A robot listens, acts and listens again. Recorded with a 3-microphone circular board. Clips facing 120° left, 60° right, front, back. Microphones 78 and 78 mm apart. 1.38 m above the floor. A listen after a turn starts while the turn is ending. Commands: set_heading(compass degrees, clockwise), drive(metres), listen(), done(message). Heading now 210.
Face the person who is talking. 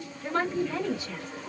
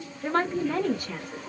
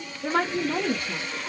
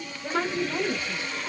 set_heading(235)
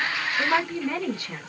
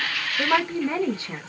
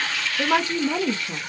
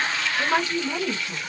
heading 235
done("Found it: a woman speaking, straight ahead.")